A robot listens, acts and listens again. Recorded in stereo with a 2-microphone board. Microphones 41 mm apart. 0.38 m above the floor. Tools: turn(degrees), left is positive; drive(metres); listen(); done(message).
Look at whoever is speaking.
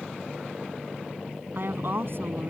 turn(degrees=-60)
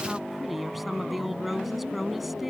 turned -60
done("Found it: a woman speaking, straight ahead.")